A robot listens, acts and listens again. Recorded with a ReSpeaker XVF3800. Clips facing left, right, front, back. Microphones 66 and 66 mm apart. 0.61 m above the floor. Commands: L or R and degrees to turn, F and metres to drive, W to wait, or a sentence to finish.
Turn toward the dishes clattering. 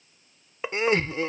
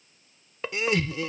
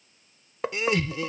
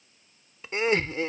L15
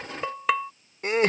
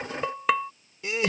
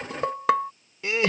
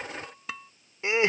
Facing the dishes clattering.